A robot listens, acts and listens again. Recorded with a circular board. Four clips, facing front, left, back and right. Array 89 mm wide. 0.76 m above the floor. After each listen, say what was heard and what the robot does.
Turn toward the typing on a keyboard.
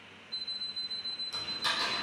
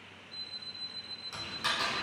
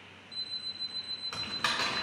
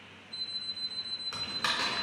The typing on a keyboard: 155° right. Turn 155° right.
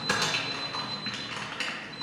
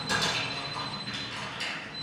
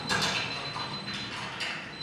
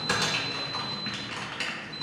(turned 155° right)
The typing on a keyboard is now 35° right. Turn 35° right.
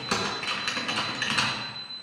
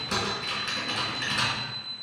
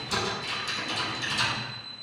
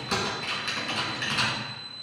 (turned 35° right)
Found it: typing on a keyboard, straight ahead, 2 to 4 m away.